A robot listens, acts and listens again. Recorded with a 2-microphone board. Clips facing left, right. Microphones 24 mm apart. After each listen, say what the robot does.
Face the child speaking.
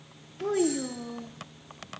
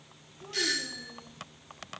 Turn 70° left.
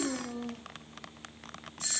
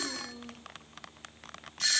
Turn 30° left.
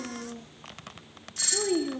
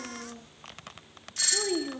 Facing the child speaking.